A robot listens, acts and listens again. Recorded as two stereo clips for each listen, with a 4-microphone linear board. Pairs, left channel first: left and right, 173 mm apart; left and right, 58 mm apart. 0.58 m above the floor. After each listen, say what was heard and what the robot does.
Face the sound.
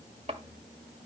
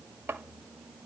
The chopping: about 40° right or 140° right. Turn 40° right.
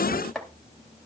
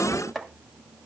Facing the chopping.